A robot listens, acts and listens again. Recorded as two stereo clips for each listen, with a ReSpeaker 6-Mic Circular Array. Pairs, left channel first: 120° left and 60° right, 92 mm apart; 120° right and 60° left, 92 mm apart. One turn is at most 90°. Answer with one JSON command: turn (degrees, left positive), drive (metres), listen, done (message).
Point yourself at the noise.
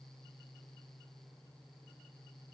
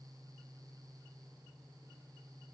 {"listen": true}
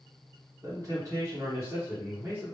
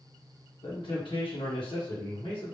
{"turn": -90}
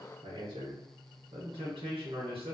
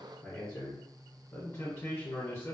{"turn": -65}
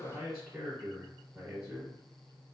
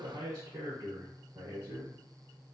{"turn": 10}
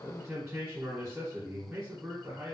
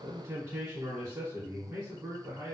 {"done": "Found it: a man speaking, straight ahead, 1 to 2 m away."}